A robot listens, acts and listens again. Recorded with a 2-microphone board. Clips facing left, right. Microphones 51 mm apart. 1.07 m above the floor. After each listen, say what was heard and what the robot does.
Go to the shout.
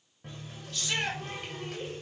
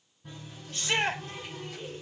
The shout: about 30° right or 150° right. Turn 30° right.
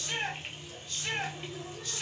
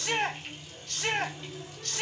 So it is at 115° right. Turn 115° right.
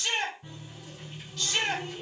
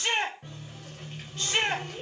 The shout is now 30° right. Turn 30° right.
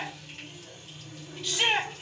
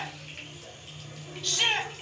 Drive 1.0 m forward.
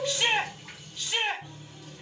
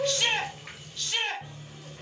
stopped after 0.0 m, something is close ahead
Blocked. The shout is further on, straight ahead.